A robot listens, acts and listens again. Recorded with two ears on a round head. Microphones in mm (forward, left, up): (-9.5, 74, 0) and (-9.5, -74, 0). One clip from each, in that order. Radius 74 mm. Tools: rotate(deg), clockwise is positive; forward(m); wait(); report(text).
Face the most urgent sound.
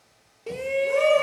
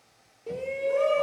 rotate(-65)
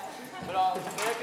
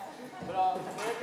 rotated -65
rotate(-45)
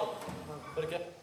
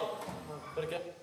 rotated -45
report("Found it: a shout, straight ahead, under 1 m away.")